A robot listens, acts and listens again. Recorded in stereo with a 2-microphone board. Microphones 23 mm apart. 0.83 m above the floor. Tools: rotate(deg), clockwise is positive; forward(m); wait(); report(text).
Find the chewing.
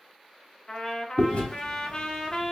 rotate(-60)
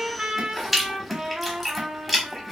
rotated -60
report("Found it: chewing, straight ahead, 1 to 2 m away.")